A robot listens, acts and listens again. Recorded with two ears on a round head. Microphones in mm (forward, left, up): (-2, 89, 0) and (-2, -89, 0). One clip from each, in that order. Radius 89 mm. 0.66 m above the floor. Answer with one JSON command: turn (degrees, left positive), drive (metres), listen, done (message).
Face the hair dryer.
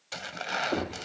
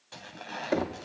{"listen": true}
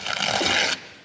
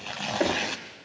{"listen": true}
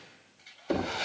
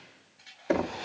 {"turn": -30}
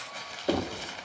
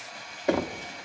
{"turn": -140}
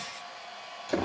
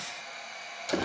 {"turn": -60}
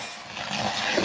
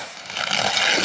{"listen": true}
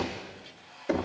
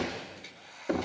{"turn": -40}
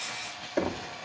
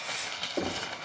{"listen": true}
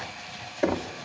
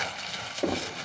{"listen": true}
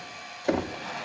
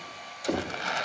{"done": "Found it: a hair dryer, straight ahead."}